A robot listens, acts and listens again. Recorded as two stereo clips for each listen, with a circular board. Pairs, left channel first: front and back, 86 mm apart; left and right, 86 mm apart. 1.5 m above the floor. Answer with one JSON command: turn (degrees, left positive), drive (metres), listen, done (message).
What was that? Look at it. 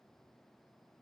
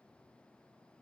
{"listen": true}
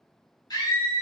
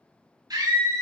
{"turn": -45}
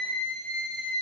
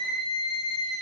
{"done": "Facing the scream, 2 to 4 m away."}